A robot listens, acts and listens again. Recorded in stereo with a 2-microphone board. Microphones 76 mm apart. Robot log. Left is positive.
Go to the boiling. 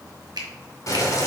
note: The boiling: about 45° left or 135° left.
cmd yaw +45
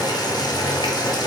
note: So it is at 90° left.
cmd yaw +90
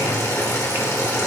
note: The boiling is now 50° left.
cmd yaw +50
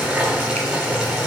note: The boiling is now 10° right.
cmd yaw -10
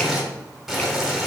cmd fwd 1.0
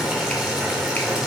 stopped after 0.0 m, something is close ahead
end: Something is in my way. I am facing the boiling but have not reached it.